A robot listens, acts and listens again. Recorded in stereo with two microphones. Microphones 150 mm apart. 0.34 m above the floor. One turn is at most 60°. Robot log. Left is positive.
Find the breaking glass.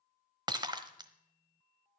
note: The breaking glass: about 30° right or 150° right.
cmd yaw -30
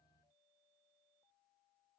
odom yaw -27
cmd idle
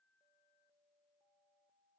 end: I heard breaking glass, but can't make it out now. It was about straight ahead or 125° right.